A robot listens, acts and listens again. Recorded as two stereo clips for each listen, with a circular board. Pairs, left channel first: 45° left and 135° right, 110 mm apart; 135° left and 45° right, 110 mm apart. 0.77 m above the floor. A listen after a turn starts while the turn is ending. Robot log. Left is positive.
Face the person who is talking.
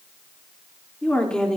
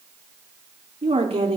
note: The woman speaking: 40° right.
cmd yaw -40
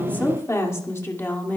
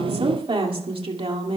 note: The woman speaking is now 25° right.
cmd yaw -25
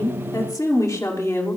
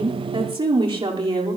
note: The woman speaking is now 15° right.
cmd yaw -15
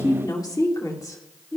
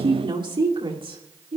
note: The woman speaking is now 15° right.
cmd yaw -15
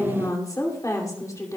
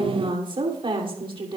note: The woman speaking is now 10° right.
cmd yaw -10
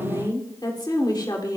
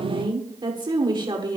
end: Facing the woman speaking, 2 to 4 m away.